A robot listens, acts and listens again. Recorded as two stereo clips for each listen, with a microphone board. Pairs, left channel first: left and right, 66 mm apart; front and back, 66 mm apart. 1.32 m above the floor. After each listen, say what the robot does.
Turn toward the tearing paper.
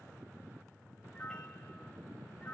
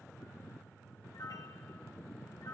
Keep listening.
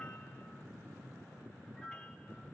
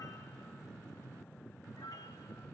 Keep listening.
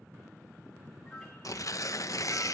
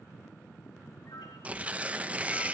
Turn 115° left.
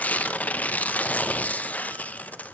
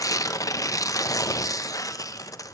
Turn 25° left.
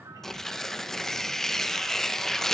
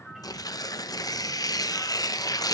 Found it: tearing paper, straight ahead.